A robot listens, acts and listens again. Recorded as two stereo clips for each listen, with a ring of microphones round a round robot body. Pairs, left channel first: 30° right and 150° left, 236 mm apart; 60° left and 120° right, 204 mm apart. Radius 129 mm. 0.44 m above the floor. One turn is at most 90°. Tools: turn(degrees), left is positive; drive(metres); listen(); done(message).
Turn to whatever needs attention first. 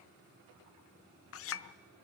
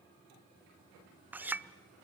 listen()
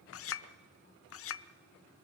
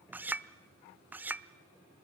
listen()
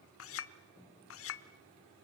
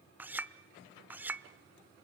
done("I can't make out anything urgent, only a clink.")